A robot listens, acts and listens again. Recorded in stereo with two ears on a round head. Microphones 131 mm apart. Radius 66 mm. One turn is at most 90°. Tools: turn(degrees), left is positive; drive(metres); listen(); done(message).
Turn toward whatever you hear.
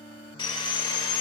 turn(degrees=30)
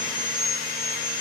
turn(degrees=90)
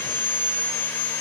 turn(degrees=15)
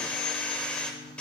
done("Facing the sawing.")